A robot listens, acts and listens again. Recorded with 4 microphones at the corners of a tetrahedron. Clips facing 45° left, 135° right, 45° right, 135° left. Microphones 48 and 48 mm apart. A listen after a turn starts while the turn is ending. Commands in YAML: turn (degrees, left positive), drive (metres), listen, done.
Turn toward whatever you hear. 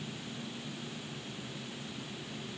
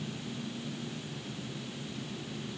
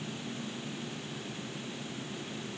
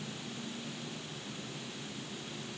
listen: true
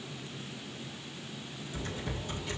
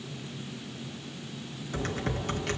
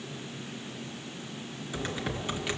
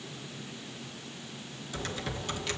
turn: -115
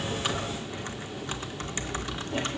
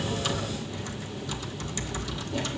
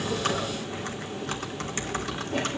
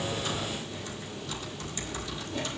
done: "Found it: typing on a keyboard, straight ahead."